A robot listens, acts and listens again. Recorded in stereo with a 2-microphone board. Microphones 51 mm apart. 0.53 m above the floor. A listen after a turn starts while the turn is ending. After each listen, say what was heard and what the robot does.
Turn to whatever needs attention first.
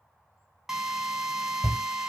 The shout: about 15° left or 165° left. Turn 15° left.
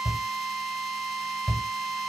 Facing the shout.